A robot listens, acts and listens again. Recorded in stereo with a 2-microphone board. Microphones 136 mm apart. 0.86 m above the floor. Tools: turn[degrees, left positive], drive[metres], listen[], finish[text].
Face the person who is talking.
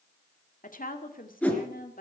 Thought: The woman speaking: about 75° left or 105° left.
Action: turn[75]
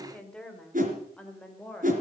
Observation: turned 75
Thought: So it is at 10° left.
Action: turn[10]
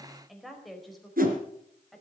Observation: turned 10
Action: finish[Found it: a woman speaking, straight ahead, over 4 m away.]